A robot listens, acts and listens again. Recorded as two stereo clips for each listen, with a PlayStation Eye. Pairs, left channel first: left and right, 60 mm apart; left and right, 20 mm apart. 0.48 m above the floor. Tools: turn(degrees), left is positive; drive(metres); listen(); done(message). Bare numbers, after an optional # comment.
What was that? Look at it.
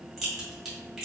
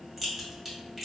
turn(30)
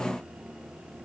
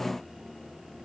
listen()
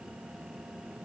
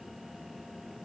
done("I heard a crack, but can't make it out now. It was about 30° right or 150° left.")